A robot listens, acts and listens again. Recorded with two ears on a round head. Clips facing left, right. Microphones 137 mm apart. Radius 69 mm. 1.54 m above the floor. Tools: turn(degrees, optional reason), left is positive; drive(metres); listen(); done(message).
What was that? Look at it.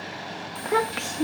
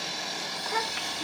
turn(degrees=55, reason="The child speaking: about 55° left or 125° left.")
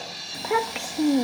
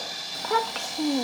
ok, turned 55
turn(degrees=15, reason="So it is at 15° left.")
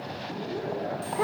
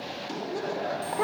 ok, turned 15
done("Found it: a child speaking, straight ahead.")